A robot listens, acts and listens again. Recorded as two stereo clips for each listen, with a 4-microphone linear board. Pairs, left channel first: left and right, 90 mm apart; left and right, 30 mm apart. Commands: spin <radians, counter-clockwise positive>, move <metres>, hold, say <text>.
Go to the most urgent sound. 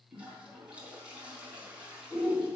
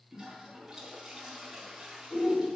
spin 0.61
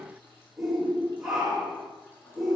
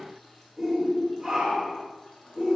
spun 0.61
move 1.0
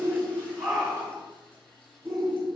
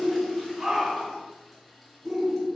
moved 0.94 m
move 1.0
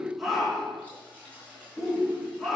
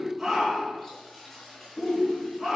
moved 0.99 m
move 1.0
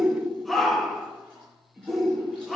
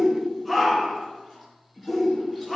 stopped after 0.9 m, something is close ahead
say Arrived at the shout, straight ahead.